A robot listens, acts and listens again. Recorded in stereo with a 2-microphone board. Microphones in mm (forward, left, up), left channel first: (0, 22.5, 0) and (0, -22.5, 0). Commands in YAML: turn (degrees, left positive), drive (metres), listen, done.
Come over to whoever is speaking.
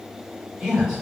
turn: -20
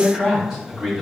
drive: 1.0
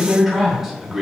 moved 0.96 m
drive: 1.0
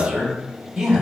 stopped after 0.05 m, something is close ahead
turn: -15
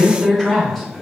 done: "I am next to the man speaking."